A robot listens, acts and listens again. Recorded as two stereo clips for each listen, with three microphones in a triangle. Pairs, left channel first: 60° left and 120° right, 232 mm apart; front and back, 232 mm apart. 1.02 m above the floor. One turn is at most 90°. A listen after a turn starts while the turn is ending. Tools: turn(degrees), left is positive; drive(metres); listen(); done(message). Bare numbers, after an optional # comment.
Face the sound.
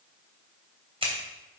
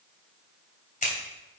# The scissors: 55° right.
turn(-55)
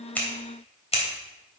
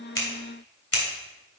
done("Facing the scissors, 2 to 4 m away.")